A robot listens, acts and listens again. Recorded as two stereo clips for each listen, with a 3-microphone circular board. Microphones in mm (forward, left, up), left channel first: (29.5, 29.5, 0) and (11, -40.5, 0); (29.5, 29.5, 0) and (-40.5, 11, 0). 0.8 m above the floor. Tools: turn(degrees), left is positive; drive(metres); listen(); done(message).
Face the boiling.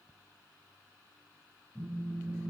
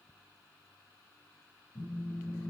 listen()
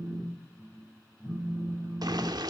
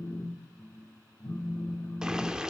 turn(degrees=-85)
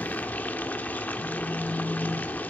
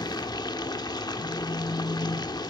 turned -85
turn(degrees=10)
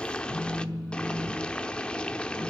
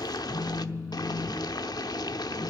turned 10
done("Found it: boiling, straight ahead, under 1 m away.")